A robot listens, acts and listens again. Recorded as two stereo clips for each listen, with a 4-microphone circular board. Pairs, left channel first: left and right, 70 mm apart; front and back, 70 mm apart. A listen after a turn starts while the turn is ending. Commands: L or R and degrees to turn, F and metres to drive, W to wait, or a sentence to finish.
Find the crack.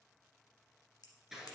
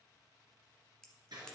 L80
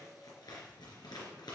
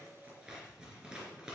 Facing where the crack came from. I can't hear it now.